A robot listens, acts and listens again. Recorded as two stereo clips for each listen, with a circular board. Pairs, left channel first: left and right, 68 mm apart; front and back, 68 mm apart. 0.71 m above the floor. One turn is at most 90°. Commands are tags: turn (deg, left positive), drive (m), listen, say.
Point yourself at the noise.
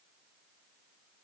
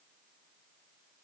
<listen/>
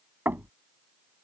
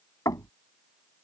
<turn deg="-30"/>
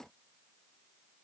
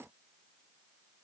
<listen/>
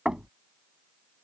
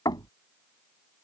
<turn deg="-10"/>
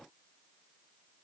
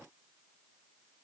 <listen/>
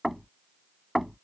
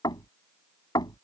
<say>Found it: knocking, straight ahead.</say>